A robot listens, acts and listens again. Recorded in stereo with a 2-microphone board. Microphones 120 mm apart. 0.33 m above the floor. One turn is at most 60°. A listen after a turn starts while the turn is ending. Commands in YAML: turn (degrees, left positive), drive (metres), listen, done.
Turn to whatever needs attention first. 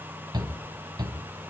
turn: -35
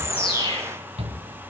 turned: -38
turn: -60
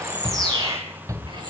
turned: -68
turn: -30
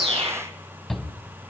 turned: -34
done: "Found it: a shout, straight ahead, 2 to 4 m away."